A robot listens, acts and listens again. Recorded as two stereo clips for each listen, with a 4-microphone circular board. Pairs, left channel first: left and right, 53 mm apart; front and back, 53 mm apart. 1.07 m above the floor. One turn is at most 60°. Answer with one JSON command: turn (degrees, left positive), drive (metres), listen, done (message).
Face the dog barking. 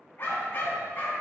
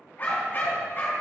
{"turn": 40}
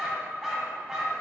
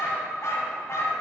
{"turn": -15}
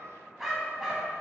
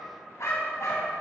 {"turn": -10}
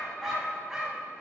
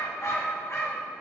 {"turn": -15}
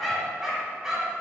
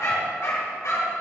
{"turn": -10}
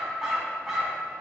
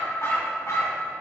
{"done": "Found it: a dog barking, straight ahead, 2 to 4 m away."}